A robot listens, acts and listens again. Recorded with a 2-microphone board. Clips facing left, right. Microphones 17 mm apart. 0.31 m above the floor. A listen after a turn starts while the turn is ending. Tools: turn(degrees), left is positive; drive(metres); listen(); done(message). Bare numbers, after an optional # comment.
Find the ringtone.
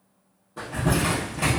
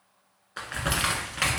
listen()
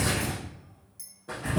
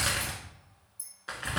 listen()
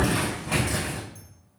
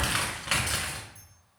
done("I can't make out a ringtone to turn to.")